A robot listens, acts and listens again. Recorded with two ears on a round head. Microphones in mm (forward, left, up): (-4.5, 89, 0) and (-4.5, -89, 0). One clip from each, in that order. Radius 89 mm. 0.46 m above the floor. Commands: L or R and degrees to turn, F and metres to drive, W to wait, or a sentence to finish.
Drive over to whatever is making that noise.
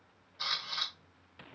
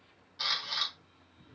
R30
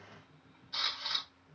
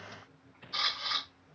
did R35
F1.0
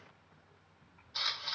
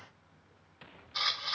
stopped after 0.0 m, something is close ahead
Something is in my way. I am facing the camera shutter but have not reached it.